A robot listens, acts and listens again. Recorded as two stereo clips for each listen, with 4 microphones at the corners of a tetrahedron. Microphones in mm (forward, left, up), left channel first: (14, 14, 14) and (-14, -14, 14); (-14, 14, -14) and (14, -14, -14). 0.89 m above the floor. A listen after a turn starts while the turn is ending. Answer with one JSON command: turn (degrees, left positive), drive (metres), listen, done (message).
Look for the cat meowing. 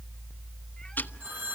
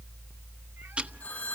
{"listen": true}
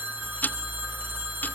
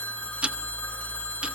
{"listen": true}
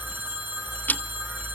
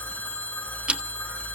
{"done": "I can't make out a cat meowing, only ticking and a phone ringing."}